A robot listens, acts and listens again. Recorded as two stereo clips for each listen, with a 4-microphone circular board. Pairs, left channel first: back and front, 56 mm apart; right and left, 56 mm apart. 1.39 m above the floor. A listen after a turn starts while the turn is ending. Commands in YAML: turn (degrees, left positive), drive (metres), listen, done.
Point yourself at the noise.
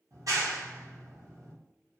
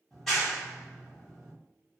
done: "Facing the clap."